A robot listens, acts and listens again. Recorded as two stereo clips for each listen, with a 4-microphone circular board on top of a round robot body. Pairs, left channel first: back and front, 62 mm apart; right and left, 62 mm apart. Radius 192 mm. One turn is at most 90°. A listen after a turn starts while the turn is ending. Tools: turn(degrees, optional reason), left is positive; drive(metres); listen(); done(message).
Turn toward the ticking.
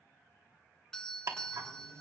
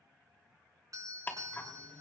turn(degrees=-30, reason="The ticking: 30° right.")
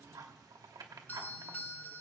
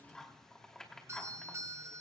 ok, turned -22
turn(degrees=-10, reason="The ticking is now 10° right.")
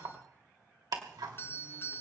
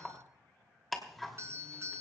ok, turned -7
done("Found it: ticking, straight ahead, 2 to 4 m away.")